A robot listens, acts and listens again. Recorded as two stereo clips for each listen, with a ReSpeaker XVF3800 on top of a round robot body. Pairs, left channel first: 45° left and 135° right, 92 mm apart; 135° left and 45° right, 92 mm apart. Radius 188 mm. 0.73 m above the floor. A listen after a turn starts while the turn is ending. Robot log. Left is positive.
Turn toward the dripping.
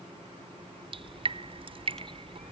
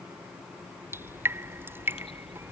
note: The dripping: 110° right.
cmd yaw -110
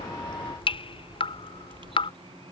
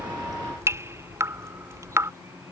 note: The dripping is now 20° left.
cmd yaw +20
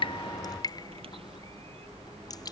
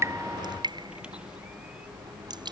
end: Found it: dripping, straight ahead.